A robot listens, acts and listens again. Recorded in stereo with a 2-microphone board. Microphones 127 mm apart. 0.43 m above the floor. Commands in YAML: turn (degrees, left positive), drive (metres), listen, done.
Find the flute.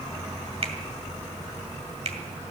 listen: true
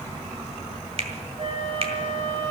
turn: -55
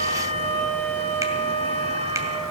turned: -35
turn: -85
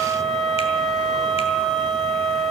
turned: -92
done: "Facing the flute, 1 to 2 m away."